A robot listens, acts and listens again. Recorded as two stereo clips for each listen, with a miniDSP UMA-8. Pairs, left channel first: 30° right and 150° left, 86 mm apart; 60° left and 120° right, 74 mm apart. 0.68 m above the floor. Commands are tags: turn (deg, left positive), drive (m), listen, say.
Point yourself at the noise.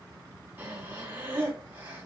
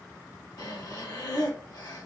<turn deg="85"/>
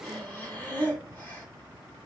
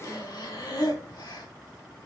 <turn deg="40"/>
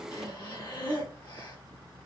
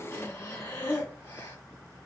<say>Facing the breathing.</say>